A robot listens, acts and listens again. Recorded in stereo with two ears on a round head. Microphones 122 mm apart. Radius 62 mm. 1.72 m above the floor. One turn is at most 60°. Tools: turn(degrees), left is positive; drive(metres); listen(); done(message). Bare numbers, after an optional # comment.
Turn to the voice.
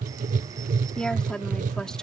turn(30)
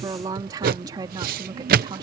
# So it is at 30° right.
turn(-30)
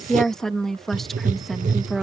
done("Found it: a woman speaking, straight ahead.")